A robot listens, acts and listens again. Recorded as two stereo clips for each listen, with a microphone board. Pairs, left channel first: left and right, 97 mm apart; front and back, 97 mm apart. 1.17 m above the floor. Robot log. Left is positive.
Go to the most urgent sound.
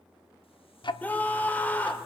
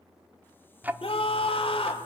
note: The scream: 15° left.
cmd yaw +15
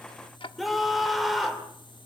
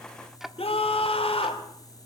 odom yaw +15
cmd fwd 1.0
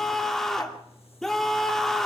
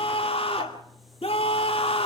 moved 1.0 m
cmd fwd 1.0
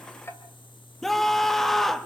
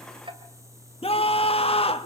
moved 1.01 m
cmd fwd 1.0
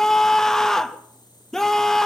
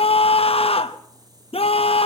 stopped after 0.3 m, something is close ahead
end: Arrived at the scream, straight ahead.